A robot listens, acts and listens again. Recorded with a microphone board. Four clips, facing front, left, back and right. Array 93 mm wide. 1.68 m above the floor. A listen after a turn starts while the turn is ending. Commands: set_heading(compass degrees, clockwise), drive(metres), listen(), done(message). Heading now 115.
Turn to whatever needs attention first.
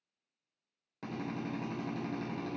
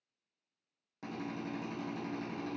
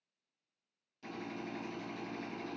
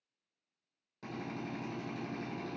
listen()
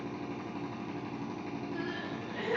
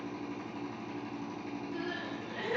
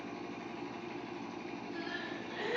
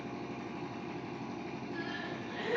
set_heading(65)
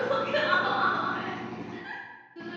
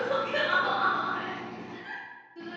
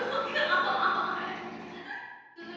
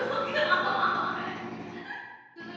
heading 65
set_heading(45)
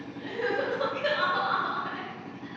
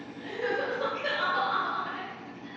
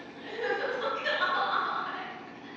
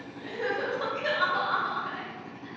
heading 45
done("Facing the crying, 2 to 4 m away.")